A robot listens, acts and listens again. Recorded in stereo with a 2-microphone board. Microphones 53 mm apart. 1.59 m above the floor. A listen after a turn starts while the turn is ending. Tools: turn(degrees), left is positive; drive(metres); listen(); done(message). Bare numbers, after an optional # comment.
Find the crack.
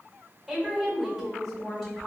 listen()
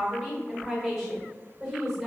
listen()
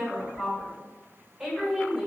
done("I can't make out a crack to turn to.")